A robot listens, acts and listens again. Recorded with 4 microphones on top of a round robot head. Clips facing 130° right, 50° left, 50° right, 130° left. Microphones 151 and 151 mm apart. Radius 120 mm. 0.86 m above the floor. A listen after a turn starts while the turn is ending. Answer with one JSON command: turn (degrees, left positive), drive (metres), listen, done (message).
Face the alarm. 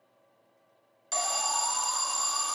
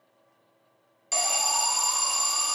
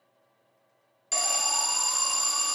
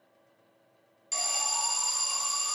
{"turn": -30}
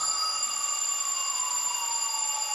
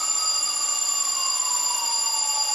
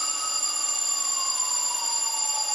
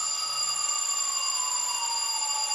{"done": "Facing the alarm, 2 to 4 m away."}